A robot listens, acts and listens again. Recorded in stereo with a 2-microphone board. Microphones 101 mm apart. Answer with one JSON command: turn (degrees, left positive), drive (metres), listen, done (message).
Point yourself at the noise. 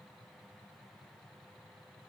{"listen": true}
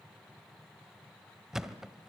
{"turn": -30}
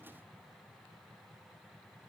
{"listen": true}
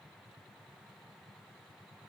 {"done": "I heard a thud, but can't make it out now. It was about 25° left or 145° right."}